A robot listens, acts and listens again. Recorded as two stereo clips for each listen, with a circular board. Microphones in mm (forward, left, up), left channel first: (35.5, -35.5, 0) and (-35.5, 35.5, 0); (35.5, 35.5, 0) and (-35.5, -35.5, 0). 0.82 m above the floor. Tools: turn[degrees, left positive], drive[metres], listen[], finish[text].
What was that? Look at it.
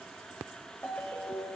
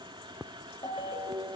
Thought: The ringtone: 25° left.
Action: turn[25]
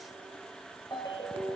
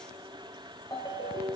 Action: finish[Found it: a ringtone, straight ahead.]